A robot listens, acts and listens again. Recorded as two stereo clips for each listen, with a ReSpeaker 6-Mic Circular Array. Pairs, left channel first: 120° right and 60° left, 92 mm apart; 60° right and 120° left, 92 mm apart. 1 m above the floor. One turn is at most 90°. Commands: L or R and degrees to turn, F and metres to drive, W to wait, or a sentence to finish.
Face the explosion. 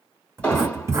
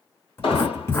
R45
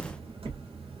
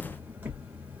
Facing where the explosion came from. I can't hear it now.